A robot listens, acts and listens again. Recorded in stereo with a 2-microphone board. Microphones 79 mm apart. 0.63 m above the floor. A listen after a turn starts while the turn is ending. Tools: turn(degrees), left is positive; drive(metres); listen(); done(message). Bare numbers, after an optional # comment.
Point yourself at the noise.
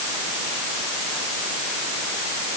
listen()
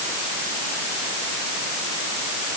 listen()
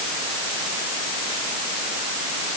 done("I can't make out anything to turn to.")